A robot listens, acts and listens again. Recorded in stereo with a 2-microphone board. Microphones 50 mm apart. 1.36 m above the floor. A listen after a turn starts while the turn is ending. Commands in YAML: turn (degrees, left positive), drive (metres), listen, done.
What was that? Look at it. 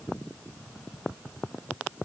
listen: true
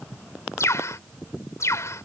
turn: 65
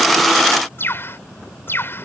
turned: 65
turn: 45
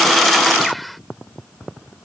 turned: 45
done: "Facing the bird."